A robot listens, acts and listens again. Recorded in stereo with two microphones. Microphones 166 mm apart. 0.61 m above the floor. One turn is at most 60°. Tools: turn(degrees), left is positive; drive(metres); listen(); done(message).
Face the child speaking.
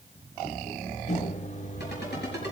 listen()
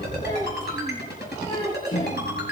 turn(degrees=30)
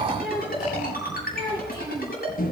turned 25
turn(degrees=60)
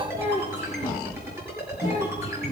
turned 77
turn(degrees=40)
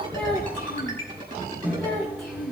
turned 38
done("Found it: a child speaking, straight ahead, over 4 m away.")